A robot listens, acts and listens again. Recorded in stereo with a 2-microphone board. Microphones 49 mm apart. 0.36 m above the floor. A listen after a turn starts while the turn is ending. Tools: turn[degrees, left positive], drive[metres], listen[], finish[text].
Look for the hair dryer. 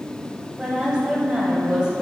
Action: listen[]
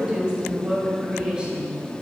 Action: listen[]
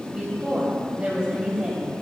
Action: finish[I can't make out a hair dryer to turn to.]